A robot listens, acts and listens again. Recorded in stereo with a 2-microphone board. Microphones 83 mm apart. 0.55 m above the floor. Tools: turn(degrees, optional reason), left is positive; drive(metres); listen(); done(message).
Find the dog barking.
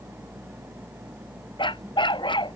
turn(degrees=75, reason="The dog barking: about 75° left or 105° left.")
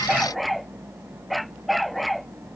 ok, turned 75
done("Facing the dog barking.")